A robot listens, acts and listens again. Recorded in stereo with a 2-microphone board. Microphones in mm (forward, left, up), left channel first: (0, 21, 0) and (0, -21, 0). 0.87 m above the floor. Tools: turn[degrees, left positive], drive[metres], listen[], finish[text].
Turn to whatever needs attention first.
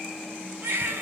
Thought: The baby crying: about 65° right or 115° right.
Action: turn[-65]
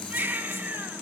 Thought: So it is at 50° right.
Action: turn[-50]
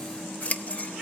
Action: listen[]
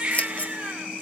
Thought: The baby crying is now 25° right.
Action: turn[-25]
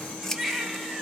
Action: finish[Facing the baby crying, 2 to 4 m away.]